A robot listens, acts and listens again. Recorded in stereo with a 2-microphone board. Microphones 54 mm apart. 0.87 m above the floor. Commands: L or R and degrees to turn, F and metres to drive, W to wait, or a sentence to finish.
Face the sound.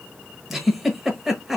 L30
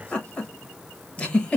L155
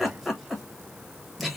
Facing the giggle, under 1 m away.